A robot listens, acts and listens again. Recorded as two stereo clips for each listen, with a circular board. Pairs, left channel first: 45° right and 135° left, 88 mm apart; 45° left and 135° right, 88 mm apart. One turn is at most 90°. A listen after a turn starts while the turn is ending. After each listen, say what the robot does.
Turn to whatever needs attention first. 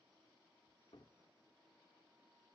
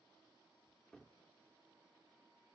Keep listening.
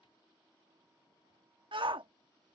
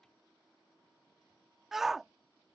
Turn 90° left.
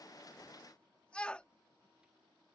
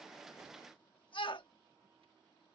Turn 30° left.
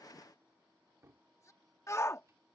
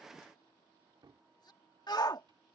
Turn 10° left.
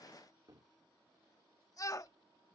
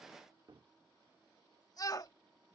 Facing the shout.